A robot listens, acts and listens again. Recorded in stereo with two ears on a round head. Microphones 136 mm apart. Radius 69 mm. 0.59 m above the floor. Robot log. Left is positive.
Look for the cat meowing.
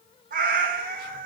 note: The cat meowing: about 55° right or 125° right.
cmd yaw -55
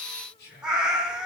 end: Found it: a cat meowing, straight ahead, under 1 m away.